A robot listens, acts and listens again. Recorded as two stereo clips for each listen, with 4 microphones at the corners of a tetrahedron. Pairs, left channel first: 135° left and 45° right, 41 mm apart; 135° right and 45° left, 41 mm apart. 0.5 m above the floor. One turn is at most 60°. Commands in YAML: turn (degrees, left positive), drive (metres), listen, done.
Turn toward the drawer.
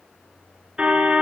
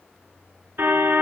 listen: true
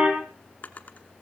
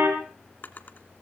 turn: -60
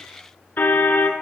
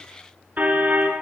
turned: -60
turn: -60
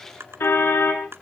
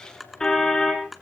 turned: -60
turn: -45
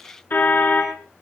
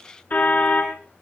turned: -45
listen: true
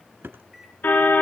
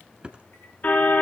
turn: -15
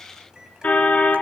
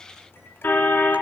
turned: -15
listen: true
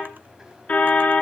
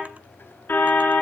listen: true
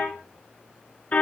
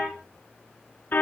done: "I heard a drawer from this way, but can't make it out now."